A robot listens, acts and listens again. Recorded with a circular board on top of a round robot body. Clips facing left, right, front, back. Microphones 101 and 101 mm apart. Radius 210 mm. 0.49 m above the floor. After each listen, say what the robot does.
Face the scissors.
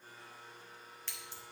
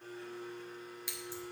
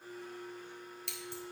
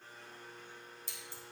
Turn 10° right.
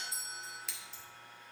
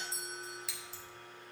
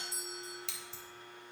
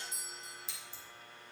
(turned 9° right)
Found it: scissors, straight ahead.